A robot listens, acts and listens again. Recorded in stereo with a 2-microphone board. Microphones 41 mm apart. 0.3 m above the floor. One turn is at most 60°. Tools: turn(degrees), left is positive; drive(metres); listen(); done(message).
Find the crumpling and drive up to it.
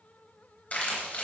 turn(degrees=45)
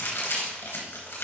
turn(degrees=60)
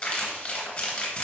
turn(degrees=20)
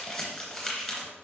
drive(metres=1.0)
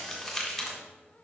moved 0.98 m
drive(metres=1.0)
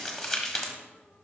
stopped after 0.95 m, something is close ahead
done("Arrived at the crumpling, straight ahead.")